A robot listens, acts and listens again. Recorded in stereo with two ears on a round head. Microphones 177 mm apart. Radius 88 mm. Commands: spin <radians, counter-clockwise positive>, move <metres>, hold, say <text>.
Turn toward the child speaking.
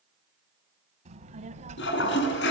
spin -0.61
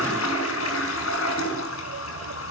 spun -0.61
spin -1.92
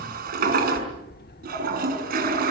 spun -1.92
spin 0.87
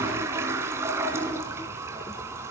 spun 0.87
hold
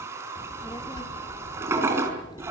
spin 0.35
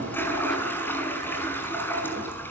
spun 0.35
hold
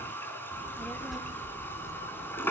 say Found it: a child speaking, straight ahead.